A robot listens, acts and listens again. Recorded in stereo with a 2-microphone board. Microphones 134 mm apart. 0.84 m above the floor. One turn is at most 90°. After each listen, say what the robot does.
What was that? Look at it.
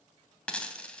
Turn 30° left.
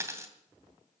Turn 20° right.
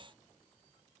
I heard a dropped coin from this way, but can't make it out now.